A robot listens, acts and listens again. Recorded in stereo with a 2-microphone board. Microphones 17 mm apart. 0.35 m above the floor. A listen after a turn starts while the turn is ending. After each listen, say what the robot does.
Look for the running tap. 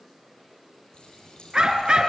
Turn 60° left.
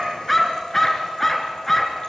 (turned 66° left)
Keep listening.
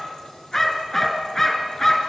Keep listening.
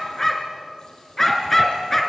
I heard a running tap, but can't make it out now. It was about 10° right or 55° left.